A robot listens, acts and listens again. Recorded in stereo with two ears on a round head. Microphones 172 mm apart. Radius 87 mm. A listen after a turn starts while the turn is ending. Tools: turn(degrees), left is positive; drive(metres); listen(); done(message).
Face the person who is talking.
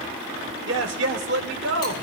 turn(degrees=-65)
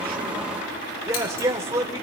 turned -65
turn(degrees=-20)
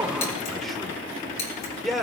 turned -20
done("Facing the man speaking, 1 to 2 m away.")